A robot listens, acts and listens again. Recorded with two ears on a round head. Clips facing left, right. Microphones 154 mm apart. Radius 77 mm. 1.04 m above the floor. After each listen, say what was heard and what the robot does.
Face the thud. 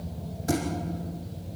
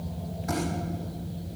The thud: about 35° left or 145° left. Turn 35° left.
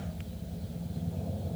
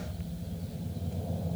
Keep listening.
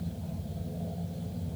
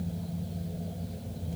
I heard a thud, but can't make it out now. It was about straight ahead or 110° left.